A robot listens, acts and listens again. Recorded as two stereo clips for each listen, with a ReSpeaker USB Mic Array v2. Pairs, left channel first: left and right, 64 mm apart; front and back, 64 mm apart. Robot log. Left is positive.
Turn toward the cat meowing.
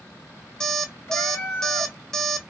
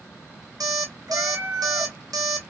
note: The cat meowing: 135° left.
cmd yaw +135
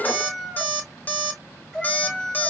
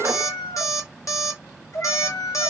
end: Facing the cat meowing.